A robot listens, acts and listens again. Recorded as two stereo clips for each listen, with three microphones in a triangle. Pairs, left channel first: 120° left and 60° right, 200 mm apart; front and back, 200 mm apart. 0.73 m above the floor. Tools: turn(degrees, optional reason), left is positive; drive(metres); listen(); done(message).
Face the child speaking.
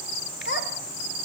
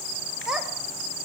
turn(degrees=95, reason="The child speaking: 95° left.")
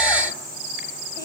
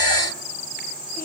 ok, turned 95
listen()
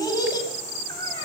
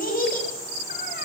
turn(degrees=50, reason="The child speaking is now 50° left.")
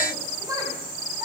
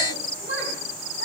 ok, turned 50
turn(degrees=15, reason="The child speaking is now 15° left.")
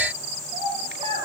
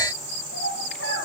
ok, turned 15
done("Facing the child speaking.")